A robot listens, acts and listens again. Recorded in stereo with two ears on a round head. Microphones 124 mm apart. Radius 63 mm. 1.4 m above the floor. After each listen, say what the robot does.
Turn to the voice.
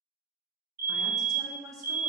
Turn 25° right.
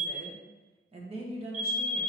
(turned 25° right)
Turn 135° right.
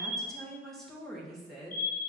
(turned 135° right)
Facing the woman speaking, 1 to 2 m away.